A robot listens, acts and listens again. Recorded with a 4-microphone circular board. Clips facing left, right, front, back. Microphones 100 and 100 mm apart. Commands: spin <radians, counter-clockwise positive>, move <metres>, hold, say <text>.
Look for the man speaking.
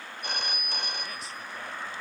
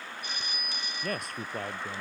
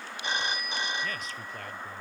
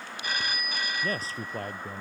spin -2.18
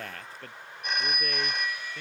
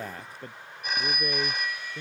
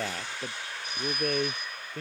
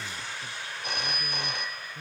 spin -0.26
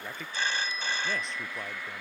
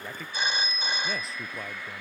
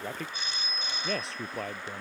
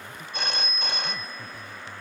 say Facing the man speaking.